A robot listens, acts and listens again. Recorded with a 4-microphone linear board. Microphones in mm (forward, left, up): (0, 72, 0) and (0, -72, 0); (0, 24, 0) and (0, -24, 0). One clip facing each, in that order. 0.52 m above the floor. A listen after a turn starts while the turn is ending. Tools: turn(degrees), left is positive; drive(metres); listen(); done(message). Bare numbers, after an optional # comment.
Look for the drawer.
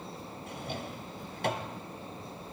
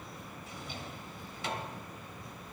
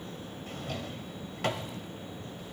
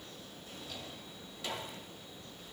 # The drawer: about 55° left or 125° left.
turn(55)
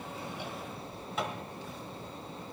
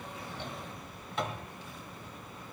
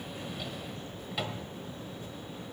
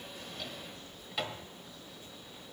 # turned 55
done("Found it: a drawer, straight ahead, 1 to 2 m away.")